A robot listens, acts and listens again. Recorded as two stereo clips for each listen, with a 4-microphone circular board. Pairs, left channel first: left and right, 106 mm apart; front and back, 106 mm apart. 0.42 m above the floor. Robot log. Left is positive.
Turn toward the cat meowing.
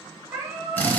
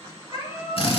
note: The cat meowing: 20° right.
cmd yaw -20
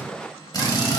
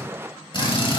cmd idle
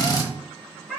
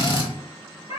end: Found it: a cat meowing, straight ahead.